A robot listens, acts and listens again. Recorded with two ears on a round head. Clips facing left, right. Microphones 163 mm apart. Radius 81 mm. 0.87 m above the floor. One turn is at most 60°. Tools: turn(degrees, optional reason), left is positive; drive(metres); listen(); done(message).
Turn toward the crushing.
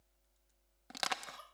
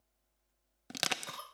turn(degrees=-35, reason="The crushing: about 35° right or 145° right.")
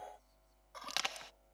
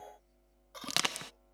turn(degrees=-60, reason="So it is at 110° right.")
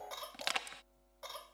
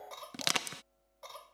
turn(degrees=-60, reason="The crushing is now 60° right.")
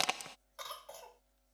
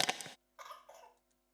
turn(degrees=-10, reason="The crushing is now 10° right.")
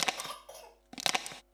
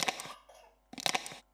done("Facing the crushing.")